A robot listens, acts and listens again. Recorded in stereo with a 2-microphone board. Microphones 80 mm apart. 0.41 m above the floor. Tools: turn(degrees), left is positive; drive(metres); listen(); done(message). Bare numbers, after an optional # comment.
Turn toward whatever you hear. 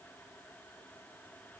listen()
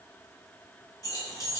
# The keys jangling: about 45° left or 135° left.
turn(45)
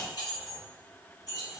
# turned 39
# The keys jangling: about 50° left or 130° left.
turn(50)
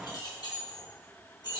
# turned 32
# So it is at 115° left.
turn(115)
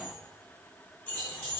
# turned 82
# The keys jangling is now 25° left.
turn(25)
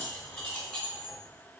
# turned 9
# The keys jangling is now 15° left.
turn(15)
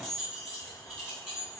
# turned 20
done("Facing the keys jangling, 2 to 4 m away.")